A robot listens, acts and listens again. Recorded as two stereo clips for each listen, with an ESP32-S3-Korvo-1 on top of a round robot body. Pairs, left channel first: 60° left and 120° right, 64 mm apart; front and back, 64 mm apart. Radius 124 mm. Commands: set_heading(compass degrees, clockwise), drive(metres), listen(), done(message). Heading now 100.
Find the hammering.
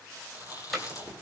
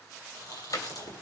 set_heading(130)
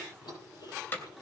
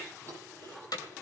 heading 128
done("Found it: hammering, straight ahead, 2 to 4 m away.")